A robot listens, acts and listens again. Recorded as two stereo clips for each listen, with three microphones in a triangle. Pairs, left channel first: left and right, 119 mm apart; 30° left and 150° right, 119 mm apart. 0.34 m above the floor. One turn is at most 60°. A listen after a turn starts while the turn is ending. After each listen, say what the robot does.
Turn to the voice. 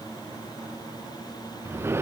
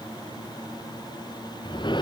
Keep listening.
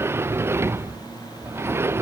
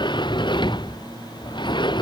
Keep listening.
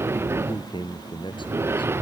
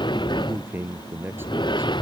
Turn 60° left.
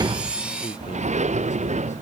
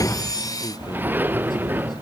Turn 60° left.
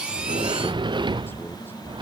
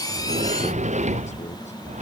Turn 20° left.
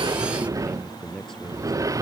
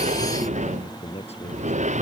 Facing the man speaking.